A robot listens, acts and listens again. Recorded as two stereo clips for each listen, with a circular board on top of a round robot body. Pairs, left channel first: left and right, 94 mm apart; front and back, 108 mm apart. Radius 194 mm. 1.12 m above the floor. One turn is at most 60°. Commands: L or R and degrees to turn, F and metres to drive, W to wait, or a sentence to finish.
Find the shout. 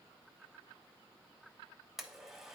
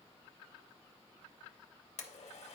W
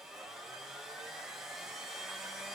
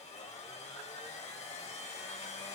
W
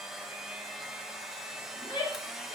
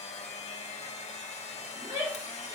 L60
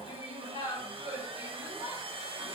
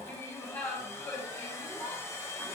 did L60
L60
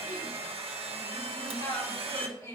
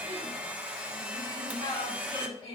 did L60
L35
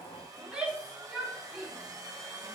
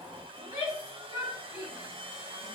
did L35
R10
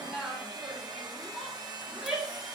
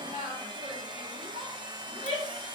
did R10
Found it: a shout, straight ahead, 2 to 4 m away.